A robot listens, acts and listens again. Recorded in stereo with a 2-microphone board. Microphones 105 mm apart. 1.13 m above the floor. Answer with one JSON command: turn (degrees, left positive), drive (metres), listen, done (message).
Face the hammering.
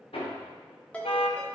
{"turn": 70}
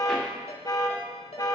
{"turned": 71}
{"listen": true}
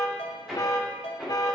{"done": "Facing the hammering."}